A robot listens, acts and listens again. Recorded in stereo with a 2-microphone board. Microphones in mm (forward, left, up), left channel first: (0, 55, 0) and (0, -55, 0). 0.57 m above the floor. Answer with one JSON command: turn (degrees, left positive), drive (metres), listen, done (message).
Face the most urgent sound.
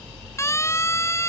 {"turn": 25}
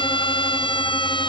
{"turn": 130}
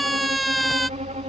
{"done": "Facing the siren."}